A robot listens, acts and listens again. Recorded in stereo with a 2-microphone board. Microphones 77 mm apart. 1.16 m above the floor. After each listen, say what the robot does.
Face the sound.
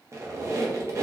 Turn 35° right.
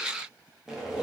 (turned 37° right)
Found it: a squeak, straight ahead.